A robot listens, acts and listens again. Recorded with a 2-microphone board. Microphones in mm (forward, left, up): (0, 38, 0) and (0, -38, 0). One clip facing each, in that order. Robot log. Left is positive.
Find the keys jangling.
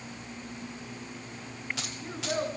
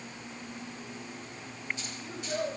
cmd yaw +90
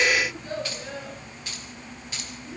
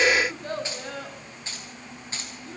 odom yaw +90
note: So it is at 30° right.
cmd yaw -30
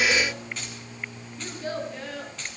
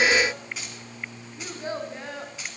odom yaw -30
note: The keys jangling is now 10° right.
cmd yaw -10
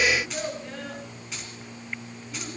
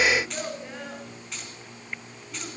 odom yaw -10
end: Facing the keys jangling.